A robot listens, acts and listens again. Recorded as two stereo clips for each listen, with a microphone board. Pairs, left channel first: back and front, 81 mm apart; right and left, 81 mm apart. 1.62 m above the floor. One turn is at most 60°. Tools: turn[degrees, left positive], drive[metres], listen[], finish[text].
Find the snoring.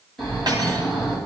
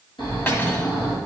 Thought: The snoring: 95° right.
Action: turn[-60]
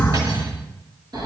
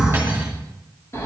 Thought: The snoring is now 35° right.
Action: turn[-35]
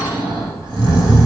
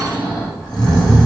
Thought: The snoring is now 10° right.
Action: turn[-10]
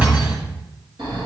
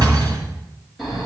Action: finish[Facing the snoring.]